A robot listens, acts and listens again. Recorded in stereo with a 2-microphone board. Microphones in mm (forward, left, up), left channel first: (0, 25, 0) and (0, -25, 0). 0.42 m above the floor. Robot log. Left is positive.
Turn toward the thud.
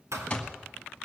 cmd yaw -90
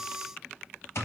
end: I heard a thud from this way, but can't make it out now.